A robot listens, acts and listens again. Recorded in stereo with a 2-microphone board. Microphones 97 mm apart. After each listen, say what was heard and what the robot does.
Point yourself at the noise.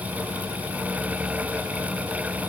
Keep listening.
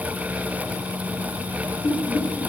The laughter: about 40° left or 140° left. Turn 40° left.
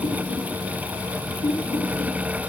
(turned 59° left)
So it is at 80° left. Turn 80° left.
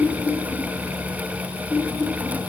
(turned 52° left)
The laughter is now 25° left. Turn 25° left.
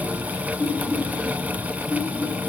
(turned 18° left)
The laughter is now 10° left. Turn 10° left.
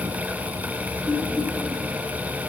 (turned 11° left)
Found it: laughter, straight ahead, 2 to 4 m away.